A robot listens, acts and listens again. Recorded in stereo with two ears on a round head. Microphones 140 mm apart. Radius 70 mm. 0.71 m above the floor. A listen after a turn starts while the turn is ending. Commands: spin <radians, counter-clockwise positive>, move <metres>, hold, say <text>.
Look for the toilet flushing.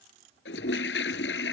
spin 1.57
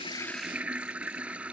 spin -0.17
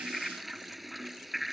say Found it: a toilet flushing, straight ahead.